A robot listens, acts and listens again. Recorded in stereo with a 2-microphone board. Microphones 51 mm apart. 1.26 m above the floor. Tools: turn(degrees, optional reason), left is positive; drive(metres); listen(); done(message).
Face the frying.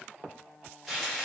turn(degrees=-30)
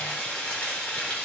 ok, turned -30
turn(degrees=30, reason="So it is at 30° left.")
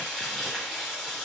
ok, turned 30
done("Facing the frying, 1 to 2 m away.")